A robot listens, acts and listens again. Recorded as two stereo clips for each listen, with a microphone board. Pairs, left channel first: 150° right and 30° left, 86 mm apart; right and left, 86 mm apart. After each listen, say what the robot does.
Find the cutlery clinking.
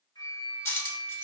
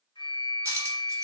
Turn 150° left.
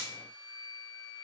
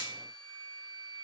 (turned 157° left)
Keep listening.
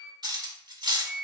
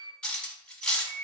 Turn 10° right.
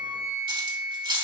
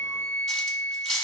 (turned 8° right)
Facing the cutlery clinking.